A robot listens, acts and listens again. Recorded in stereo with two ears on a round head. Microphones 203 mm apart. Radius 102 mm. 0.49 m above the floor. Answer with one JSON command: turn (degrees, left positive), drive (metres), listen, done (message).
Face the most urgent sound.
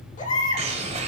{"turn": 35}
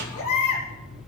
{"turn": 110}
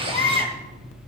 {"turn": 25}
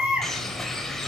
{"done": "Found it: a baby crying, straight ahead."}